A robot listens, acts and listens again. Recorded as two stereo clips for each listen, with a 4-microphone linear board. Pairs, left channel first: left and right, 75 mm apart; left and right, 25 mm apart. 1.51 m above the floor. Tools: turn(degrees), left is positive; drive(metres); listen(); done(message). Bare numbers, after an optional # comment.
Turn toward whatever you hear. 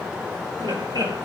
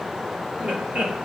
# The laughter: about 75° right or 105° right.
turn(-75)
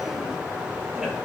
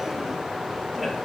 # So it is at 10° right.
turn(-10)
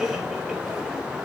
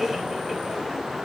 listen()
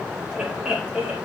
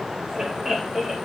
# The laughter is now 10° right.
turn(-10)
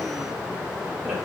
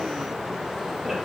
listen()
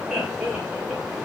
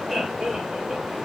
done("Found it: laughter, straight ahead, over 4 m away.")